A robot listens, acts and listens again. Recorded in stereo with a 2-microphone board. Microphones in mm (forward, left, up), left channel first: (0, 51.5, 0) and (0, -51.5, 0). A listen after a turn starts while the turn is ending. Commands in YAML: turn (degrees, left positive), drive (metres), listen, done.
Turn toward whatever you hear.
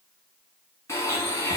turn: 30
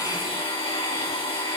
turn: 120
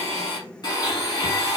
turn: 45
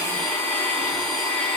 done: "Found it: a blender, straight ahead."